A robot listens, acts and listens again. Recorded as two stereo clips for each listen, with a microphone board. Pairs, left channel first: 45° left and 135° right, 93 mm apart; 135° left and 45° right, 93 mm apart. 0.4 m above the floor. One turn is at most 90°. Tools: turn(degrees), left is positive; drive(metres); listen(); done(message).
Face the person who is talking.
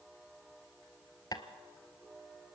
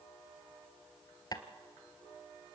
listen()
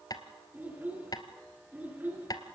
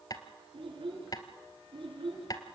turn(degrees=-65)
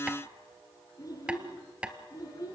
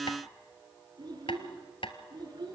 done("Found it: a child speaking, straight ahead.")